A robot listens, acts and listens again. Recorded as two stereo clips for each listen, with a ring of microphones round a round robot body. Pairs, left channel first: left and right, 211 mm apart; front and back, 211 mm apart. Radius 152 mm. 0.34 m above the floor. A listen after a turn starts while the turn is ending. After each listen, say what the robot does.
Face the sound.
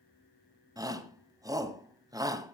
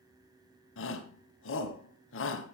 Turn 20° right.
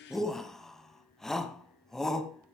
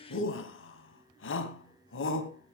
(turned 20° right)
Facing the shout, 2 to 4 m away.